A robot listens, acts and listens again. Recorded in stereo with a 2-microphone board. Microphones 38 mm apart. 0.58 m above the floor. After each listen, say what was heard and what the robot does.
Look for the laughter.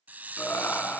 The laughter: about 75° left or 105° left. Turn 75° left.
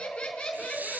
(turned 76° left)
So it is at 20° left. Turn 20° left.
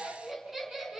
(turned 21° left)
The laughter is now 10° right. Turn 10° right.
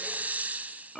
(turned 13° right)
Facing the laughter, over 4 m away.